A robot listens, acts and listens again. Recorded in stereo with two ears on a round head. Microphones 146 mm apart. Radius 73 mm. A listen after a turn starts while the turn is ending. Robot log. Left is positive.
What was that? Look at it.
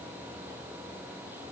cmd idle
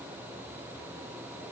cmd idle
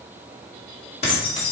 note: The keys jangling: about 35° left or 145° left.
cmd yaw +35
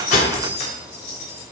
note: So it is at 120° left.
cmd yaw +120
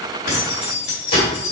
note: The keys jangling is now 35° left.
cmd yaw +35
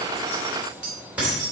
note: The keys jangling is now 10° right.
cmd yaw -10
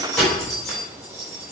end: Found it: keys jangling, straight ahead.